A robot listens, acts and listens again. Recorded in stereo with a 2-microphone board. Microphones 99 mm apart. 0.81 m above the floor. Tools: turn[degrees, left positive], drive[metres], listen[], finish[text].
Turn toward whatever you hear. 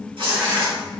Thought: The tearing paper: about 70° right or 110° right.
Action: turn[-70]
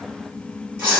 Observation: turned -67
Thought: So it is at 25° right.
Action: turn[-25]
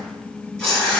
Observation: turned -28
Action: finish[Found it: tearing paper, straight ahead.]